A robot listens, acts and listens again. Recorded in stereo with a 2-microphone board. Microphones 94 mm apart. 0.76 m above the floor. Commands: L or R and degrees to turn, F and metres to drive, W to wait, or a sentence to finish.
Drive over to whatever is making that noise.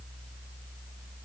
W
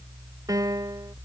R40
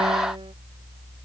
W
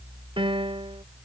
R100
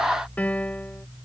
L15
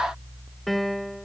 F1.0
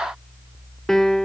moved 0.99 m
F1.0
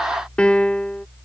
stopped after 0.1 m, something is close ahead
L10
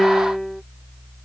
Arrived at the piano, straight ahead.